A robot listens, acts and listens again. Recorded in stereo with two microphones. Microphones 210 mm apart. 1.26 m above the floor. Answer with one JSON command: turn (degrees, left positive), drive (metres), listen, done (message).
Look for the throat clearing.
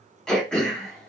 {"turn": 30}
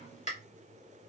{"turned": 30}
{"turn": 145}
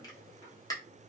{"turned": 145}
{"turn": 15}
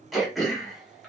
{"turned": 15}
{"done": "Found it: throat clearing, straight ahead."}